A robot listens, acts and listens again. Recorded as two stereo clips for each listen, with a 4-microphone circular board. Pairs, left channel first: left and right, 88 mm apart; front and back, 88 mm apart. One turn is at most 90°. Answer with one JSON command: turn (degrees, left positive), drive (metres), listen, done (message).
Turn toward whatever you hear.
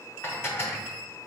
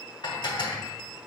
{"turn": 30}
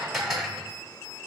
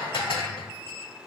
{"done": "Facing the dishes clattering, 1 to 2 m away."}